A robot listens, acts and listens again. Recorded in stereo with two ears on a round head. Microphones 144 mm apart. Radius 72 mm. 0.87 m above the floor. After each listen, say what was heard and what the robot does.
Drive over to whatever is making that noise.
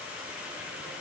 Keep listening.
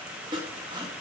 The sawing: about 30° right or 150° right. Turn 30° right.
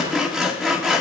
Drive 1.0 m forward.
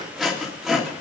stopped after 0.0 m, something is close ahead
Blocked. The sawing is further on, straight ahead.